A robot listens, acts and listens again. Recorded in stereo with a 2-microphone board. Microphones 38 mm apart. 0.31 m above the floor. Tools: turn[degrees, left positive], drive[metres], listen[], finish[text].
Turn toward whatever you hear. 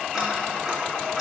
Action: turn[-30]
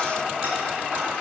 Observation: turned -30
Thought: So it is at 140° right.
Action: turn[-140]
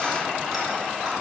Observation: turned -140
Action: listen[]
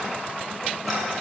Action: listen[]
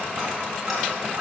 Action: finish[Found it: ticking, straight ahead.]